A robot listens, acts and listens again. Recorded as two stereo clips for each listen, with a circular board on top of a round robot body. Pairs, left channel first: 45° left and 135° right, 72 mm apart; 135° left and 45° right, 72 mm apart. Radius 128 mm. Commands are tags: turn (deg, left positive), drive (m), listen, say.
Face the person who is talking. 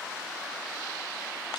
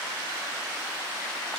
<listen/>
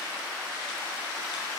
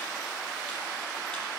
<listen/>
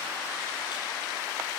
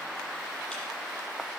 <say>I can't make out anyone speaking to turn to.</say>